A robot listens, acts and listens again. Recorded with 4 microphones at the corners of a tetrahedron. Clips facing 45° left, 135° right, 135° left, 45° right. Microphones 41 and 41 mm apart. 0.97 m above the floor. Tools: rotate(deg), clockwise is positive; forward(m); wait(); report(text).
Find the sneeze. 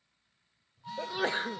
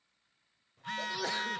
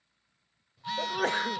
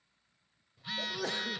rotate(-100)
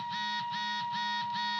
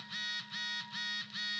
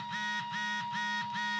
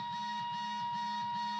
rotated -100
report("Facing where the sneeze came from. I can't hear it now.")